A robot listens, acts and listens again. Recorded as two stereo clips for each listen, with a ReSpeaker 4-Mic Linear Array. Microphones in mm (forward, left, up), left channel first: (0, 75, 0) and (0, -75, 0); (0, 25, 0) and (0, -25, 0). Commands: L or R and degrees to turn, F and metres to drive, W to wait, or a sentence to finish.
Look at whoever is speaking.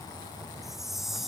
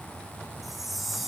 W
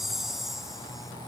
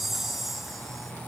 W
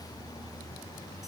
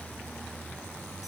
I can't make out anyone speaking to turn to.